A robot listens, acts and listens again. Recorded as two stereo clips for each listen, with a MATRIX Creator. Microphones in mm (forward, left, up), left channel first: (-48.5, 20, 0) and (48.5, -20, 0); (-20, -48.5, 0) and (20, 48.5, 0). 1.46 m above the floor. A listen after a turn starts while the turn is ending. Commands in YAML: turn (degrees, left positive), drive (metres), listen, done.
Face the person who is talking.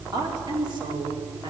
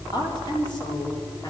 turn: -65
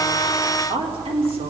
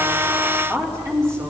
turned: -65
done: "Found it: a woman speaking, straight ahead."